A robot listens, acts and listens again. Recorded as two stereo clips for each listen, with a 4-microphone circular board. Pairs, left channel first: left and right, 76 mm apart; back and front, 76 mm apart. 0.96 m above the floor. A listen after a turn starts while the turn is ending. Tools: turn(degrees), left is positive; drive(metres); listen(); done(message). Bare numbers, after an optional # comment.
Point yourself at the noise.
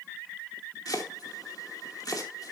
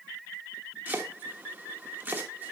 # The chopping: 65° left.
turn(65)
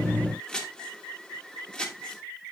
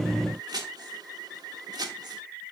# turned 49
# The chopping is now 15° left.
turn(15)
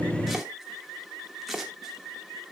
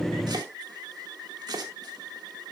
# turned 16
done("Found it: chopping, straight ahead.")